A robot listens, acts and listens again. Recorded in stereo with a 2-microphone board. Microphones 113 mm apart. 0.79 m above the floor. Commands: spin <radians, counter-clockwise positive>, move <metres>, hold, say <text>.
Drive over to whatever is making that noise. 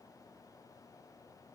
hold
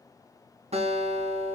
spin -1.57
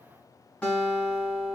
spin 0.17
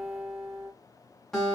move 1.0
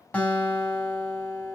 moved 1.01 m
spin 0.26
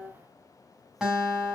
move 1.0
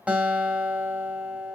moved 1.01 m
spin -0.17
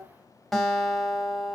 move 1.0
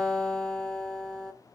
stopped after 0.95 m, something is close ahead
spin 0.17
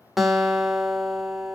say Arrived at the guitar, straight ahead.